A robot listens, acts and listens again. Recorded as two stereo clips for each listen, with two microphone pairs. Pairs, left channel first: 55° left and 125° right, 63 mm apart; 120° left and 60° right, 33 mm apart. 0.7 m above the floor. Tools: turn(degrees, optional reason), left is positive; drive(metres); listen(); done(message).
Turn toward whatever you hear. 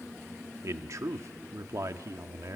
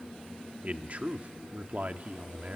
turn(degrees=-100, reason="The man speaking: 100° right.")
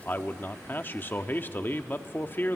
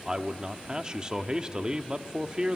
done("Found it: a man speaking, straight ahead.")